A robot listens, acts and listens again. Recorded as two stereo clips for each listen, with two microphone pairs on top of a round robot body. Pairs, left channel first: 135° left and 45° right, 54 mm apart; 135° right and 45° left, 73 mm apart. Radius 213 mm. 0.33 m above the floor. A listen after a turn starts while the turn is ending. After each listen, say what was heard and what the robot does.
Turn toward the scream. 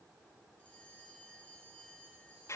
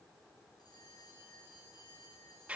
Keep listening.
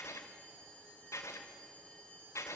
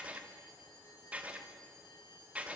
Keep listening.
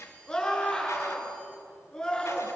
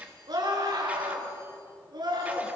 The scream: 55° left. Turn 55° left.
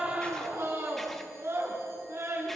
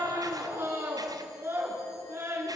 The scream is now 10° right. Turn 10° right.
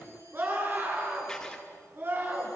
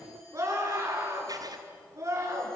Facing the scream.